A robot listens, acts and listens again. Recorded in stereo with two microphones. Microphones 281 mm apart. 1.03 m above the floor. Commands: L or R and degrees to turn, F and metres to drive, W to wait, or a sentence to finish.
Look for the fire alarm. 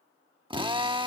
W
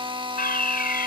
L35
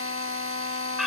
Found it: a fire alarm, straight ahead.